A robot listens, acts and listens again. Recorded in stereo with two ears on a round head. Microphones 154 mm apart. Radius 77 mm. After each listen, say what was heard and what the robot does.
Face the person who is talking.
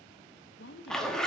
The woman speaking: about 65° left or 115° left. Turn 65° left.
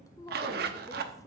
So it is at 20° left. Turn 20° left.
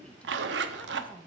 The woman speaking is now 10° left. Turn 10° left.
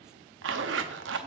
Keep listening.
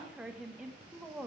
Facing the woman speaking.